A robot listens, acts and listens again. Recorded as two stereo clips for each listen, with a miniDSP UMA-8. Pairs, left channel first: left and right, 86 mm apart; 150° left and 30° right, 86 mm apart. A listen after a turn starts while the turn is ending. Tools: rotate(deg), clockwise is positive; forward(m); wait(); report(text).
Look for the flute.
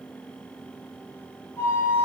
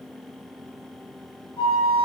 rotate(-150)
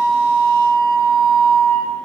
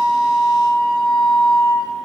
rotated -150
rotate(-15)
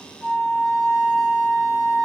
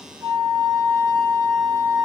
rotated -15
report("Found it: a flute, straight ahead.")